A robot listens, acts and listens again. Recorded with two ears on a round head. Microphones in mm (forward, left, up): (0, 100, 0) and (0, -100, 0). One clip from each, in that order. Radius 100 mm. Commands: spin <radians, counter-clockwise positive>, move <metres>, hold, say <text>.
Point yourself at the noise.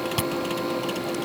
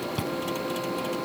spin 0.87
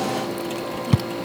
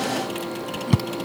say Found it: chewing, straight ahead.